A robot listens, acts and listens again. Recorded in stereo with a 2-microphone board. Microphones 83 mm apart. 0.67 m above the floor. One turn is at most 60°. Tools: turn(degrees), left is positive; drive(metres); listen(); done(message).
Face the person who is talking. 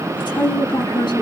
turn(degrees=60)
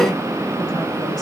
listen()
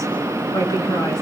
turn(degrees=50)
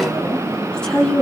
turn(degrees=10)
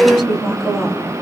done("Found it: a woman speaking, straight ahead, over 4 m away.")